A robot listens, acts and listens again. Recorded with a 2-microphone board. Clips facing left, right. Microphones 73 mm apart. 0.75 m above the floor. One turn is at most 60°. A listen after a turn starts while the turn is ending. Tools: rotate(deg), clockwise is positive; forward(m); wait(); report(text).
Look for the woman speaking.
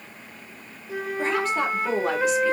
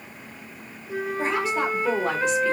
rotate(-30)
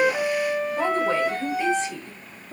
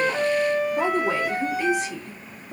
rotate(30)
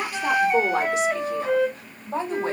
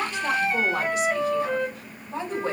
rotate(-35)
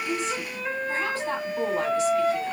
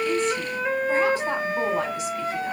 wait()
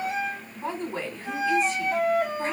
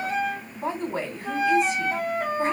rotate(20)
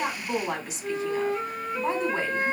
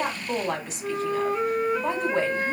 report("Found it: a woman speaking, straight ahead, 2 to 4 m away.")